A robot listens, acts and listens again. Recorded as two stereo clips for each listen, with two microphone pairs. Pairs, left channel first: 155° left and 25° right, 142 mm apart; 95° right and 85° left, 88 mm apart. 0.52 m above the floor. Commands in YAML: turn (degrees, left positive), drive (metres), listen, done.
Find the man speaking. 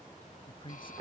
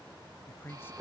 turn: -155
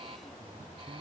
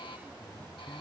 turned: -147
turn: -10
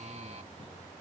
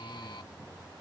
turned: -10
listen: true
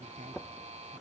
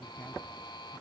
turn: -25
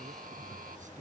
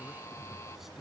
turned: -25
listen: true
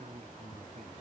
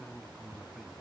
done: "Found it: a man speaking, straight ahead."